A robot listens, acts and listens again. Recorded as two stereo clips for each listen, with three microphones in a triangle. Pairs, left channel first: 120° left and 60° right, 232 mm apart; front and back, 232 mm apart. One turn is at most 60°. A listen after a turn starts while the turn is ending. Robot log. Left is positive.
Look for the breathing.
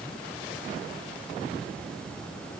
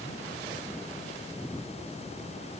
cmd idle
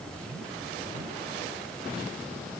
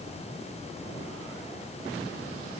cmd idle
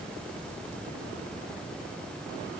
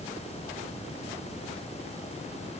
end: I can't make out breathing.